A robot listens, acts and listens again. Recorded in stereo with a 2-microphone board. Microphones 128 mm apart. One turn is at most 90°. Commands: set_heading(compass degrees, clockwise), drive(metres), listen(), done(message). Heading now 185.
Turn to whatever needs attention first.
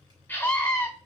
set_heading(155)
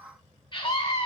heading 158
set_heading(68)
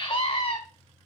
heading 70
set_heading(20)
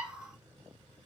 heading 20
listen()
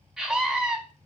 done("Found it: a scream, straight ahead.")